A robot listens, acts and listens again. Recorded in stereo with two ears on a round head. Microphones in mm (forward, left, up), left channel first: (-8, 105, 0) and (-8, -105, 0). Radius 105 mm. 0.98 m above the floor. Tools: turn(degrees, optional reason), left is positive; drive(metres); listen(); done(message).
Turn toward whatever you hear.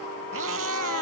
turn(degrees=-65, reason="The cat meowing: about 65° right or 115° right.")
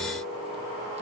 listen()
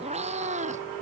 turn(degrees=-30, reason="So it is at 30° right.")
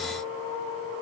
listen()
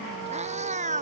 turn(degrees=-30, reason="The cat meowing is now 30° right.")
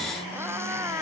turn(degrees=-10, reason="The cat meowing is now 10° right.")
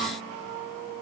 listen()
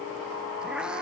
listen()
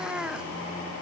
done("Facing the cat meowing.")